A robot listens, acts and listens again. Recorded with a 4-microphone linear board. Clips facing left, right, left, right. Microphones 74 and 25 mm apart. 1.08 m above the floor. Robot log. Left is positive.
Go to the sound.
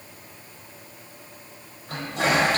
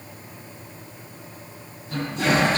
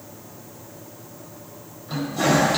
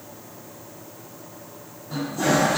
cmd yaw +90
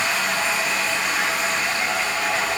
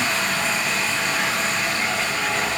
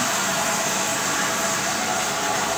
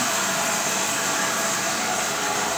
note: So it is at 10° left.
cmd yaw +10
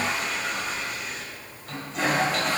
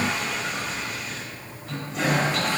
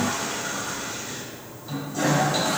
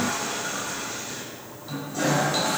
cmd fwd 1.0
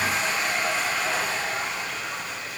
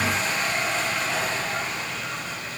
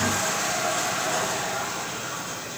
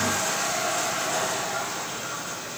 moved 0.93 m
cmd fwd 1.0
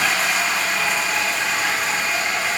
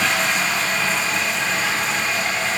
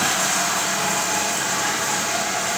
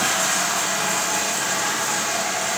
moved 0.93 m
cmd fwd 1.0
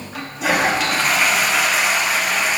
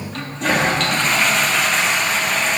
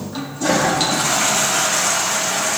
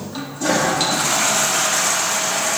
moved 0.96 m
cmd fwd 1.0
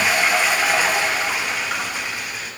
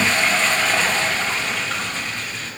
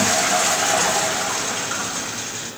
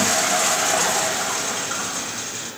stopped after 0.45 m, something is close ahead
note: The toilet flushing is now 10° left.
cmd yaw +10
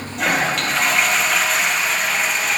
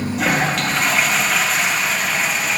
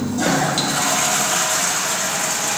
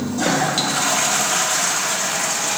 end: I am next to the toilet flushing.